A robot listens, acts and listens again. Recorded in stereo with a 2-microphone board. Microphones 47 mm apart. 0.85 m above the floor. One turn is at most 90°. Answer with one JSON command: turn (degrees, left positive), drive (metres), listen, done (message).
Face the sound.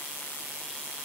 {"listen": true}
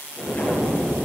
{"turn": 35}
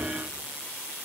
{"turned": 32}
{"listen": true}
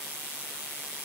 {"done": "I heard an explosion, but can't make it out now. It was about straight ahead or 115° left."}